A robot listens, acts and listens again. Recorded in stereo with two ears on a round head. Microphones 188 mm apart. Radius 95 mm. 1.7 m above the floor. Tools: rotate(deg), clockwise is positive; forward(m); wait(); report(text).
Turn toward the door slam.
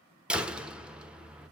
rotate(30)
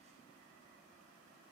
wait()
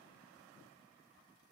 report("I heard a door slam, but can't make it out now. It was about 25° left or 145° right.")